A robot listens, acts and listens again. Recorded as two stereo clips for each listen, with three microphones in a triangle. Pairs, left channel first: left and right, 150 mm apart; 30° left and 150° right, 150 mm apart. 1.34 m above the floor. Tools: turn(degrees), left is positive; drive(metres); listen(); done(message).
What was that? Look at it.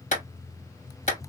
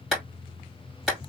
turn(degrees=125)
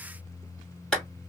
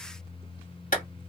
done("Found it: a clap, straight ahead.")